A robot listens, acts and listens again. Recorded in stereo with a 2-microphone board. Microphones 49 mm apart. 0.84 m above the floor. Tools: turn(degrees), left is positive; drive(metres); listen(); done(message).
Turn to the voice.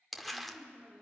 turn(degrees=-55)
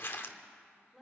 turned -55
done("Found it: a woman speaking, straight ahead.")